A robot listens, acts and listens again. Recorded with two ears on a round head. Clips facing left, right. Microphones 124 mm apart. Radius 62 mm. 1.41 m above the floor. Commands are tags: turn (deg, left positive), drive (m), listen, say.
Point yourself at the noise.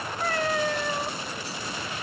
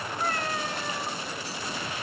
<turn deg="60"/>
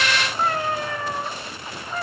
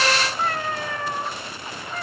<turn deg="10"/>
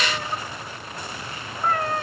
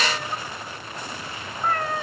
<say>Facing the cat meowing.</say>